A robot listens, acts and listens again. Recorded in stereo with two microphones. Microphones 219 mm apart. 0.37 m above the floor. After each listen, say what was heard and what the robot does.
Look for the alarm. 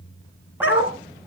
Keep listening.
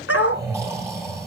Keep listening.
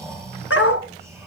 I can't make out an alarm, only a dog barking and snoring.